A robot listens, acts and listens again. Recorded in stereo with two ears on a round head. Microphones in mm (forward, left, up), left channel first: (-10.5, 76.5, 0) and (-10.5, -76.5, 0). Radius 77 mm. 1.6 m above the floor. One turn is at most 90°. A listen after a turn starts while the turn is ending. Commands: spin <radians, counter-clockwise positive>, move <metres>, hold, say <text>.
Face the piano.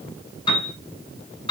spin 0.52
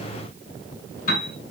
spin 1.57
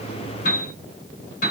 spin 0.96
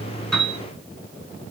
hold
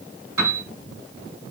spin -0.35
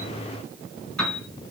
say Facing the piano.